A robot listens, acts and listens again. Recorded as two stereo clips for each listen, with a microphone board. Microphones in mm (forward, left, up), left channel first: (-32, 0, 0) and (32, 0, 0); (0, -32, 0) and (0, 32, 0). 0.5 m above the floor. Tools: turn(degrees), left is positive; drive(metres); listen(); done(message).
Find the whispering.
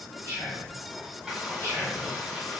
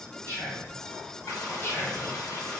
turn(degrees=-130)
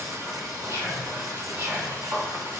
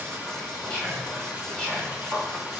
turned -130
turn(degrees=-20)
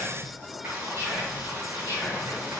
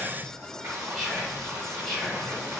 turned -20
done("Found it: whispering, straight ahead, 2 to 4 m away.")